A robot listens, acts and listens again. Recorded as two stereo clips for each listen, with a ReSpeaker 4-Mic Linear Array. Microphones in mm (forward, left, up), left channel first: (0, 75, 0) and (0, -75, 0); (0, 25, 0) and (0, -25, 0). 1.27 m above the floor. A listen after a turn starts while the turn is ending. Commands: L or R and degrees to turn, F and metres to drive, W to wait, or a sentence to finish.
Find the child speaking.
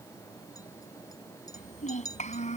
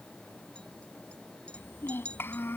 L55
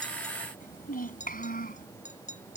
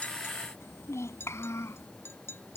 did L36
L85
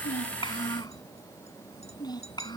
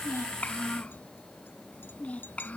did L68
L30
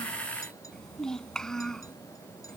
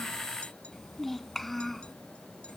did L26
Found it: a child speaking, straight ahead.